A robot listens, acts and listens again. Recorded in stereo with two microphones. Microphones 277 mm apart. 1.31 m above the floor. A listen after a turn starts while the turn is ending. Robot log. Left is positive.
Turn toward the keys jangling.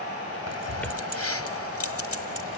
note: The keys jangling: about 55° left or 125° left.
cmd yaw +55
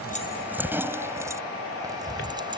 note: So it is at 15° right.
cmd yaw -15
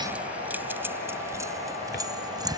note: The keys jangling is now 15° right.
cmd yaw -15
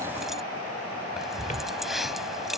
end: Found it: keys jangling, straight ahead.